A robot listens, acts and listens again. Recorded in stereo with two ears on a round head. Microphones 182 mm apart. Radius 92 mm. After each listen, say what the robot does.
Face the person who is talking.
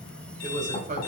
Turn 40° right.
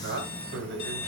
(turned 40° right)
Turn 110° right.
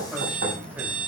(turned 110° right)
Turn 10° right.
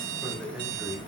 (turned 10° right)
Found it: a man speaking, straight ahead.